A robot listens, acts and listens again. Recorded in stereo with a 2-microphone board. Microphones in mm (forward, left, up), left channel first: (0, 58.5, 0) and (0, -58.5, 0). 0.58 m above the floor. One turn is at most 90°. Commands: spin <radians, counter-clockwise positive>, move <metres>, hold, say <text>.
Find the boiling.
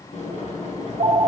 spin 1.57
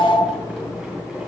say Found it: boiling, straight ahead, 2 to 4 m away.